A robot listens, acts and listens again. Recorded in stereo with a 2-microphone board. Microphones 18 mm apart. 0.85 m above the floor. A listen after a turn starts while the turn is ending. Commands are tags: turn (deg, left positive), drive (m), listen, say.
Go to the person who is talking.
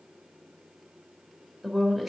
<turn deg="-30"/>
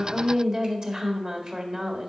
<turn deg="-135"/>
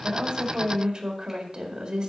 <turn deg="-60"/>
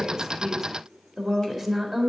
<drive m="1.0"/>
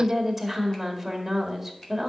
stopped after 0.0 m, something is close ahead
<say>Something is in my way. I am facing the woman speaking but have not reached it.</say>